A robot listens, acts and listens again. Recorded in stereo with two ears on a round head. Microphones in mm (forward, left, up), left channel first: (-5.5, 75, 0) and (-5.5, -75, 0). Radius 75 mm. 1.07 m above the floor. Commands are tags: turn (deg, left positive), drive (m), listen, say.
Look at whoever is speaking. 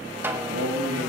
<turn deg="-60"/>
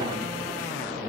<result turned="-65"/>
<listen/>
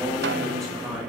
<say>Facing the man speaking.</say>